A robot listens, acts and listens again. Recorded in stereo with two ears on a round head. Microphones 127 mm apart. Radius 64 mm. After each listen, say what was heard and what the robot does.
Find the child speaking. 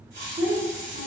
The child speaking: about 55° right or 125° right. Turn 55° right.
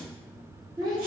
So it is at 30° right. Turn 30° right.
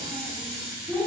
The child speaking is now 25° right. Turn 25° right.
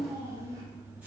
The child speaking is now 25° right. Turn 25° right.
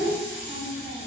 The child speaking is now 25° right. Turn 25° right.
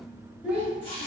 The child speaking is now 10° right. Turn 10° right.
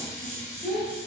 Facing the child speaking, 1 to 2 m away.